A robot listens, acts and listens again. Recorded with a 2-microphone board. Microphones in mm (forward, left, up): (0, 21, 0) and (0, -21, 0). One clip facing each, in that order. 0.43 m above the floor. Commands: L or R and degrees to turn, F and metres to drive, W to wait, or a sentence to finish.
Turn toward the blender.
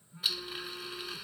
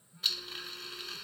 L30
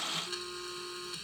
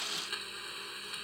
R20
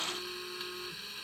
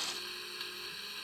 Found it: a blender, straight ahead.